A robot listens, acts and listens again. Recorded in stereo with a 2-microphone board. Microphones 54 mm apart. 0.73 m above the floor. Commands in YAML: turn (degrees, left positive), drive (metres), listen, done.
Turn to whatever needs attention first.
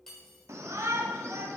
turn: -60
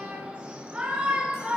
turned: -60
turn: -25
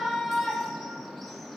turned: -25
done: "Facing the shout."